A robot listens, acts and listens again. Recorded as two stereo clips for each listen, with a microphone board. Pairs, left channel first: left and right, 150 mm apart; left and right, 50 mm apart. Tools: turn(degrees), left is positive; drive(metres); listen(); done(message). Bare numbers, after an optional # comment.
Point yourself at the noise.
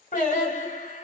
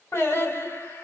# The singing: about 55° left or 125° left.
turn(55)
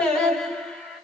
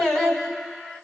done("Found it: singing, straight ahead.")